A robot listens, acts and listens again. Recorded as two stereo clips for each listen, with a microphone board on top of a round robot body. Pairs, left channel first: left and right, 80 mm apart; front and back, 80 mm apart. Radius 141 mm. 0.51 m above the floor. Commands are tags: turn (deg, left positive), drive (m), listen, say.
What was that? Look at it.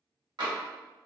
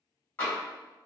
<turn deg="-65"/>
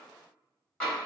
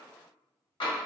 <turn deg="15"/>
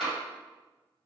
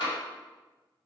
<say>Facing the tapping.</say>